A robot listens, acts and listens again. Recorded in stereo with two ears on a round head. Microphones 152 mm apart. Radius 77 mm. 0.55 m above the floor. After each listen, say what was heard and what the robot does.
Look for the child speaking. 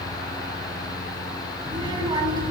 The child speaking: about 25° right or 155° right. Turn 25° right.
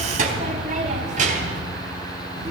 So it is at 135° right. Turn 135° right.
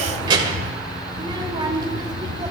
The child speaking is now 25° right. Turn 25° right.
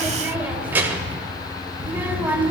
The child speaking is now 10° right. Turn 10° right.
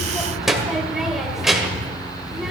Facing the child speaking, 1 to 2 m away.